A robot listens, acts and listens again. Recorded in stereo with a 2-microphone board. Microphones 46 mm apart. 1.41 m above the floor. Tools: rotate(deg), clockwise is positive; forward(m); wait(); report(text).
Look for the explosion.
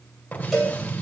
rotate(-35)
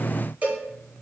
wait()
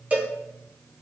report("I heard an explosion, but can't make it out now. It was about straight ahead or 110° left.")